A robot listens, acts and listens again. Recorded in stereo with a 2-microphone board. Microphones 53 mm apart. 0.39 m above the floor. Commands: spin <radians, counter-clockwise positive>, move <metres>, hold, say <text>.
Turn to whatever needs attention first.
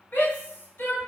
spin 0.70
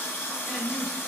spin 0.17
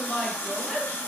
say Found it: a shout, straight ahead, 1 to 2 m away.